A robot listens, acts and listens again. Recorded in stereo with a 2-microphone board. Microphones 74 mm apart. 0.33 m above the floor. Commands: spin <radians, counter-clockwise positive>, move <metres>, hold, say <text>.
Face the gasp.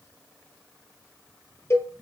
hold
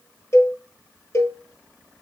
hold
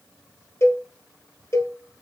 say I can't make out a gasp to turn to.